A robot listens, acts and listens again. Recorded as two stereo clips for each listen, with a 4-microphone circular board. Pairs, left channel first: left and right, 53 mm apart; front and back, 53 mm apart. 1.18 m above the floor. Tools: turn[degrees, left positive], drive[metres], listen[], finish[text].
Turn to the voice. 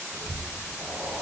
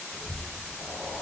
Thought: The child speaking: 90° right.
Action: turn[-90]
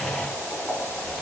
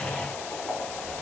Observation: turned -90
Action: listen[]
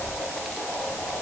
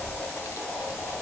Action: finish[Facing the child speaking, under 1 m away.]